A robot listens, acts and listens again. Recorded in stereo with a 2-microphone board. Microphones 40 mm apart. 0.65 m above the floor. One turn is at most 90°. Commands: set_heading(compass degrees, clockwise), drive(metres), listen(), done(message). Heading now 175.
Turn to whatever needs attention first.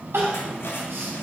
set_heading(265)
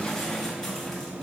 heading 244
set_heading(264)
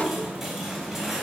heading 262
listen()
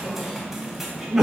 set_heading(272)
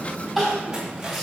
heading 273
done("Found it: crying, straight ahead, 2 to 4 m away.")